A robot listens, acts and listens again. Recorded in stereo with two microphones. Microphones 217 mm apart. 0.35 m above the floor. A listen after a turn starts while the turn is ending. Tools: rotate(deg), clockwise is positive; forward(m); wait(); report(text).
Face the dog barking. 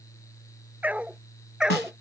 rotate(30)
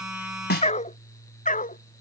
rotate(-35)
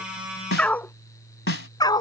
rotate(-20)
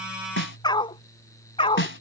rotate(-25)
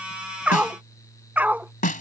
rotate(10)
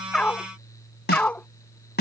report("Found it: a dog barking, straight ahead.")